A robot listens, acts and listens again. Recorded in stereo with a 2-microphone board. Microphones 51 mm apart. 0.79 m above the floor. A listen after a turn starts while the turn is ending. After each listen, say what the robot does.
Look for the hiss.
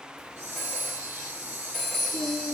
Turn 65° right.
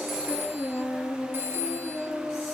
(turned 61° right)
Keep listening.
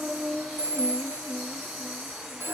Facing the hiss, 2 to 4 m away.